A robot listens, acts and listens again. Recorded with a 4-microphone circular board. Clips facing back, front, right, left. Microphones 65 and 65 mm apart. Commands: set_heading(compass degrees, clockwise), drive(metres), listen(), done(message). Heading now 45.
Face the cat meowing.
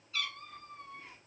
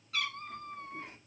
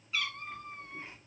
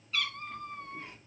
set_heading(55)
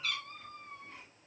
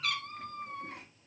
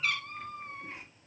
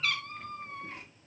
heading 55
done("Facing the cat meowing.")